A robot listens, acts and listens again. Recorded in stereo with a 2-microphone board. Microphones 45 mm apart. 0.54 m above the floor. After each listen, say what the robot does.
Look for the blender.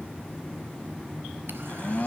Turn 40° left.
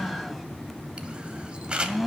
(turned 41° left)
Facing the blender, under 1 m away.